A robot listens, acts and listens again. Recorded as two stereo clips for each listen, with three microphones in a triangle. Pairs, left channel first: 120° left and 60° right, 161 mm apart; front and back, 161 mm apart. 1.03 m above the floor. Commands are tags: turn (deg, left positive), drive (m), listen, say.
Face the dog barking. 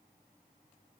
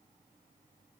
<listen/>
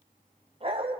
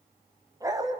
<turn deg="-115"/>
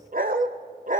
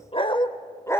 <turn deg="-75"/>
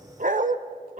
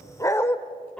<turn deg="-85"/>
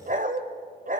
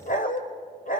<turn deg="-30"/>
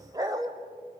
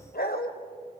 <say>Found it: a dog barking, straight ahead, 1 to 2 m away.</say>